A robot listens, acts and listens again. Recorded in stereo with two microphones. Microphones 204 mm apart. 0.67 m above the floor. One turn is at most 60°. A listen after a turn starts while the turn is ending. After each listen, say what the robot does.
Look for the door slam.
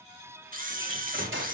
Turn 60° right.
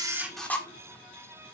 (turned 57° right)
Turn 35° right.
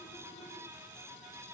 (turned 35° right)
I heard a door slam from this way, but can't make it out now.